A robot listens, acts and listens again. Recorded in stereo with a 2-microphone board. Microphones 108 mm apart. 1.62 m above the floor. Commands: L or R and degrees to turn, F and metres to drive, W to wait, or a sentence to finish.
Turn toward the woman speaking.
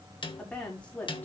L30
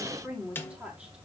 R10
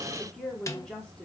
L10
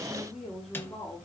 Found it: a woman speaking, straight ahead.